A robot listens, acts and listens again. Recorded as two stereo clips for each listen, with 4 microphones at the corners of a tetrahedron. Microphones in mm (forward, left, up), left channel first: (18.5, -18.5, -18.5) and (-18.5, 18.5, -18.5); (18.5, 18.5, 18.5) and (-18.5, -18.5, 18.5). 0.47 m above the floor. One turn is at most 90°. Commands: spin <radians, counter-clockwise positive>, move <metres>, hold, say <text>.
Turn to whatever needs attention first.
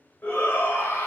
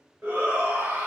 spin -1.57
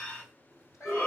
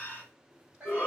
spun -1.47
say Found it: a shout, straight ahead, 1 to 2 m away.